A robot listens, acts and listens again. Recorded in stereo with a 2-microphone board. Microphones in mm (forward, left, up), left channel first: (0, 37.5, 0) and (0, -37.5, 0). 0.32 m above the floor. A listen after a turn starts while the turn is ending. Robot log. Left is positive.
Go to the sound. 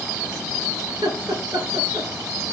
note: The laughter: about 75° right or 105° right.
cmd yaw -75
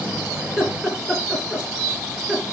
cmd fwd 1.0
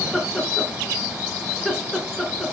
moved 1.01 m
cmd fwd 1.0
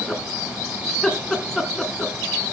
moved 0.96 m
cmd fwd 1.0
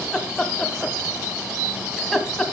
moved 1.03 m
cmd fwd 1.0
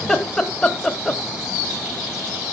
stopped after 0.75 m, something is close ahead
note: The laughter is now 15° left.
cmd yaw +15
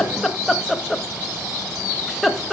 end: I am next to the laughter.